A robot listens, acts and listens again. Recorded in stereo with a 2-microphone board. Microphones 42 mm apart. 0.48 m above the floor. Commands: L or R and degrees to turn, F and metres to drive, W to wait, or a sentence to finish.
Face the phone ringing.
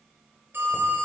R65
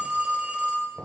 R35
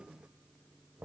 W
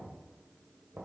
W
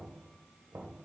Facing where the phone ringing came from. I can't hear it now.